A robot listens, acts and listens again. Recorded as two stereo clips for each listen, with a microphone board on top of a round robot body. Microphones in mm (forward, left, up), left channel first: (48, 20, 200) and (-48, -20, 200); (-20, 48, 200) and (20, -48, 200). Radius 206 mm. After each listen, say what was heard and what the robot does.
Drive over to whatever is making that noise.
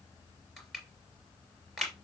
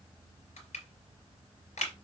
The crushing: 115° left. Turn 115° left.
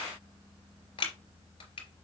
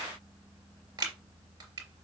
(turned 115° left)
The crushing is now 10° right. Turn 10° right.
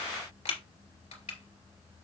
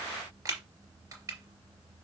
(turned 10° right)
Drive 1.0 m forward.
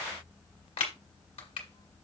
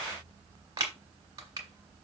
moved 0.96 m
The crushing is now 10° right. Turn 10° right.
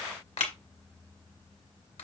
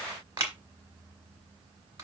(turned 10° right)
Drive 1.0 m forward.
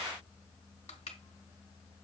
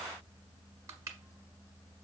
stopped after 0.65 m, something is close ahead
Keep listening.
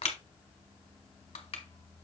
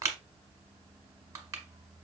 Arrived at the crushing, straight ahead.